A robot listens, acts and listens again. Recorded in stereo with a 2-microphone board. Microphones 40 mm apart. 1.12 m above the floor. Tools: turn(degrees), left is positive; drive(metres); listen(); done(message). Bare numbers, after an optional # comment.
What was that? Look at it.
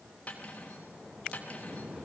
# The cutlery clinking: about 35° left or 145° left.
turn(35)
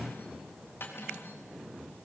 # So it is at 110° left.
turn(110)
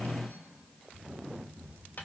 # The cutlery clinking is now 40° left.
turn(40)
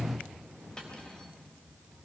# The cutlery clinking is now 15° left.
turn(15)
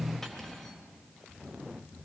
listen()
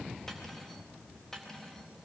# The cutlery clinking is now 10° left.
turn(10)
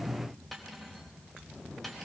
done("Found it: cutlery clinking, straight ahead, 2 to 4 m away.")